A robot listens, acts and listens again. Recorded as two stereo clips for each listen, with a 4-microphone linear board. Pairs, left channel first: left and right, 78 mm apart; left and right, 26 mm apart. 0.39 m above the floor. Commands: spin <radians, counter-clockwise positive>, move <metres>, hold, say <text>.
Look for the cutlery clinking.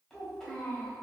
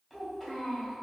hold
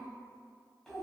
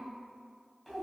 hold
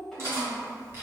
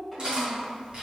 spin -0.61
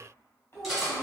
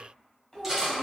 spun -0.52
say Found it: cutlery clinking, straight ahead.